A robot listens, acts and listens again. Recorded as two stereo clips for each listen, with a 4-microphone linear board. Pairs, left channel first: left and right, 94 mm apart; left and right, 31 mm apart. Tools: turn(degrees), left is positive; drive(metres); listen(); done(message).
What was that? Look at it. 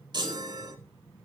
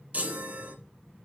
turn(degrees=-50)
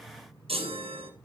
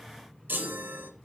turn(degrees=-80)
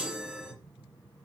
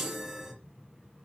turn(degrees=-10)
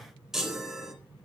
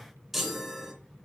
done("Found it: a chime, straight ahead.")